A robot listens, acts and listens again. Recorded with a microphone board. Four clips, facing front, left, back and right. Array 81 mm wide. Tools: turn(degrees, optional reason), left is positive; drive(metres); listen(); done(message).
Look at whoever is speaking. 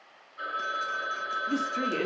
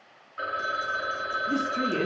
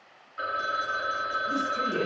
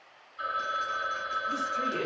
turn(degrees=35, reason="The woman speaking: 35° left.")
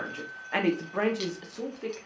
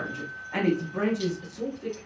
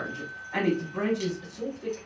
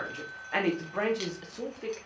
turn(degrees=-50, reason="The woman speaking is now 50° right.")
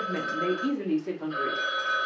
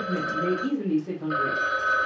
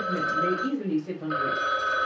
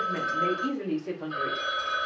turn(degrees=-30, reason="The woman speaking is now 30° right.")
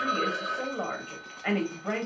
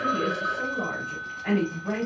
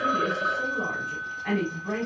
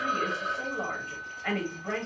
done("Found it: a woman speaking, straight ahead.")